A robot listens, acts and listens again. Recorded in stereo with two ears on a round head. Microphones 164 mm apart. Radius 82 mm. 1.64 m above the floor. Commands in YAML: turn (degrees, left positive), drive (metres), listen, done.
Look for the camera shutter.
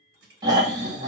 listen: true
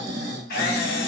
turn: 55
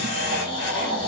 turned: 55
listen: true
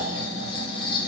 listen: true
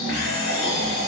done: "I heard a camera shutter, but can't make it out now. It was about straight ahead or 70° left."